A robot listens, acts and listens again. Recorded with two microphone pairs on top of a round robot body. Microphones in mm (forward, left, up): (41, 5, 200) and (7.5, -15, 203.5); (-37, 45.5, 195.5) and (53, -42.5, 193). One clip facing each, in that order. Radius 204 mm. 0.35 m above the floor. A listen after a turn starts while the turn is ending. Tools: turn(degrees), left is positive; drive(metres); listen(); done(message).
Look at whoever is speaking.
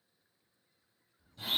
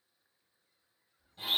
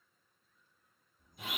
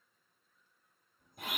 turn(degrees=165)
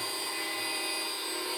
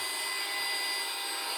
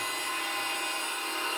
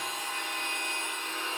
listen()
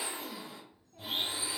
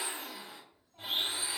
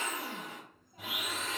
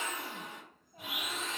turn(degrees=40)
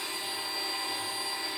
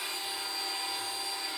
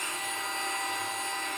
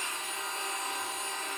listen()
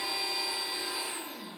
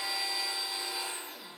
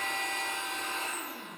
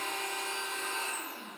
listen()
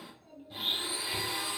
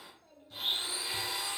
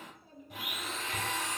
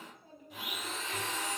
done("Found it: a child speaking, straight ahead, 1 to 2 m away.")